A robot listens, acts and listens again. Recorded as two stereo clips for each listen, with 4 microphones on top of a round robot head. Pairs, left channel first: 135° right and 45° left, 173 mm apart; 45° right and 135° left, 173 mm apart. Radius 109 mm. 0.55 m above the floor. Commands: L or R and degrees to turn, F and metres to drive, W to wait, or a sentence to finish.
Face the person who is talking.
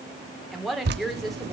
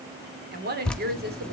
L135
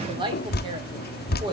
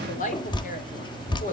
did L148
R10
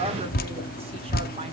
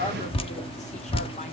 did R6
W
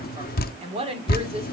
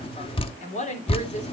Found it: a woman speaking, straight ahead, 2 to 4 m away.